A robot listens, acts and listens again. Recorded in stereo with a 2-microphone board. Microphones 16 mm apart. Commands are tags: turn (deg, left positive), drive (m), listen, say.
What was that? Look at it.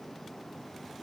<listen/>
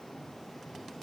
<listen/>
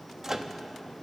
<turn deg="-25"/>
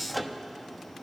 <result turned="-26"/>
<say>Facing the microwave.</say>